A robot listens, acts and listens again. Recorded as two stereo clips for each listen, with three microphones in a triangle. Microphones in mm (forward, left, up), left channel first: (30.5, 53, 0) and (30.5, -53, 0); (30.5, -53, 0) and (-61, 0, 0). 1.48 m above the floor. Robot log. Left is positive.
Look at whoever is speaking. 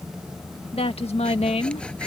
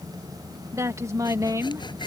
note: The woman speaking: 90° left.
cmd yaw +90
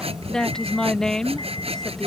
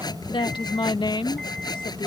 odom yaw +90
end: Found it: a woman speaking, straight ahead.